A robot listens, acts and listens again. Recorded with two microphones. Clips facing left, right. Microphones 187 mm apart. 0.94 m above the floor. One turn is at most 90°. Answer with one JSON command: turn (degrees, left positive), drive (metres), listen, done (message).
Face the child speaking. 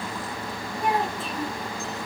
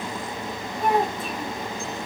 {"turn": -55}
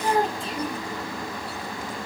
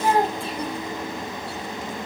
{"turn": -70}
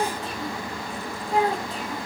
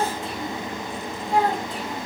{"turn": -35}
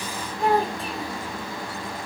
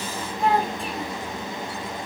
{"done": "Facing the child speaking."}